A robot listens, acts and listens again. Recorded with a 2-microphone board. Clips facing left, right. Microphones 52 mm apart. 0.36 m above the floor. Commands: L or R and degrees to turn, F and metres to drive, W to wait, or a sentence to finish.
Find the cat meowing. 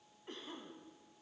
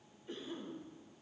W
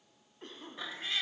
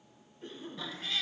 L25
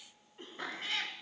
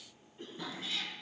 L130
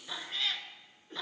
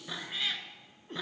R10
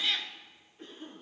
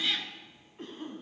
Found it: a cat meowing, straight ahead.